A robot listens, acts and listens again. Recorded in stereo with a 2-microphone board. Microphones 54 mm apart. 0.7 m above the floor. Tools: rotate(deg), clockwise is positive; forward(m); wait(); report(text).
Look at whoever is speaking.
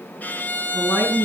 rotate(-60)
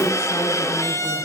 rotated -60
wait()
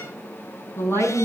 rotate(-55)
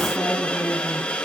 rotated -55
wait()
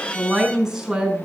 report("Found it: a woman speaking, straight ahead, over 4 m away.")